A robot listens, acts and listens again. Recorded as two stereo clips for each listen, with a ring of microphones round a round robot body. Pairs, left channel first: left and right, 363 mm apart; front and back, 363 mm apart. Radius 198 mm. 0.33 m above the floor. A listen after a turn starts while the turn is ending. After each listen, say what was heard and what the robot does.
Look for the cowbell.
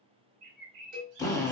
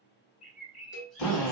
The cowbell: 55° right. Turn 55° right.
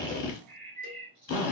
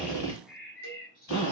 Keep listening.
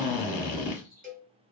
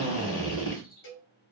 The cowbell is now 25° right. Turn 25° right.
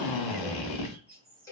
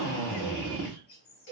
The cowbell is now 10° left. Turn 10° left.
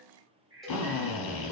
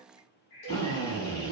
Keep listening.
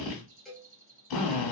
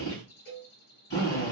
Facing the cowbell, 1 to 2 m away.